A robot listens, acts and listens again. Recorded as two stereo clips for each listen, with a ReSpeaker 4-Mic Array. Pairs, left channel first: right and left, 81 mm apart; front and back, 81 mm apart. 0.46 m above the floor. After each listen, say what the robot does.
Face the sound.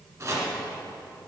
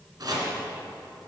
Turn 140° left.
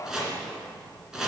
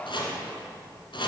Found it: chopping, straight ahead, 1 to 2 m away.